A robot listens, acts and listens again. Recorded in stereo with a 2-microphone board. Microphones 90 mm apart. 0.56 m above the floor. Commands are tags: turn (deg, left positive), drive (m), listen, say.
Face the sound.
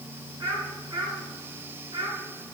<turn deg="-55"/>
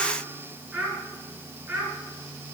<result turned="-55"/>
<turn deg="-20"/>
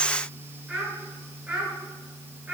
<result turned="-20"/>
<turn deg="-15"/>
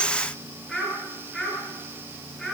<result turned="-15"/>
<say>Found it: a child speaking, straight ahead.</say>